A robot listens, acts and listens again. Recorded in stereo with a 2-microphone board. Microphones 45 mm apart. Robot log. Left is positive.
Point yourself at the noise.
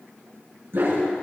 note: The dog barking: about 60° right or 120° right.
cmd yaw -60
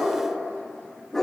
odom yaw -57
note: So it is at 15° left.
cmd yaw +15
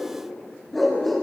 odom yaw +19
end: Found it: a dog barking, straight ahead.